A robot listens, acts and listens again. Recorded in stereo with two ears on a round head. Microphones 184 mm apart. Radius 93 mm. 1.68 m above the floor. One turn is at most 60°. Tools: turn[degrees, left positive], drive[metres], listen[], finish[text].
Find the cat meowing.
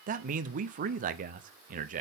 Action: listen[]
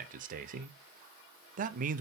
Action: listen[]
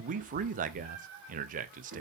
Thought: The cat meowing: about 60° right or 120° right.
Action: turn[-60]
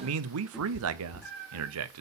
Action: finish[Found it: a cat meowing, straight ahead.]